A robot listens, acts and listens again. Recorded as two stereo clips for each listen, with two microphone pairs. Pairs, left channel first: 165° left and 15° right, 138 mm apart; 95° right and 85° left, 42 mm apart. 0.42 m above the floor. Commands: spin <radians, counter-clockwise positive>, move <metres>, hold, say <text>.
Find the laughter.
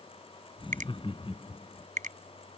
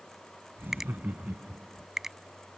spin 2.09
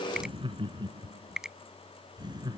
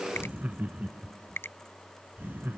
spin 0.79
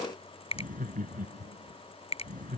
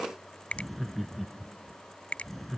say Facing the laughter.